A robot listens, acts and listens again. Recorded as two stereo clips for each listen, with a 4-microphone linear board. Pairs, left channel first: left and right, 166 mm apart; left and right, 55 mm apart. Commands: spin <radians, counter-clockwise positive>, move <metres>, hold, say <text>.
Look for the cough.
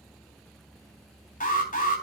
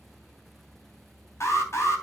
hold
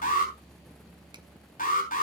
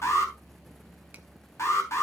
hold
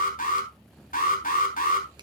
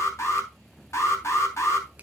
say I can't make out a cough, only an alarm.